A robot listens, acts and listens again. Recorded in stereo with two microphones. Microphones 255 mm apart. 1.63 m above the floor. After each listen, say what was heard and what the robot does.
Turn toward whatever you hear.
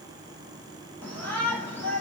Turn 90° left.
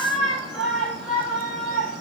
Found it: a shout, straight ahead.